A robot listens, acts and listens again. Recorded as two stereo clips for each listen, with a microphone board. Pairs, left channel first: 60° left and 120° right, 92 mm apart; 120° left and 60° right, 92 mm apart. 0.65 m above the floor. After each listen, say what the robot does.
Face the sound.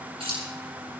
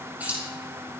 Turn 130° right.
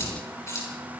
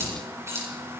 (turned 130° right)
Found it: keys jangling, straight ahead, over 4 m away.